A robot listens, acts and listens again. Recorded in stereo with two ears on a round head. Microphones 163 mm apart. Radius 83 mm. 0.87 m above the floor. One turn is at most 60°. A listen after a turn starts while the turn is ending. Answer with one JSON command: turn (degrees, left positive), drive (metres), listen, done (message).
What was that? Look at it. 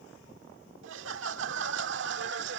{"turn": -60}
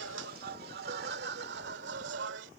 {"turn": -60}
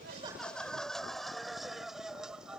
{"done": "Found it: laughter, straight ahead."}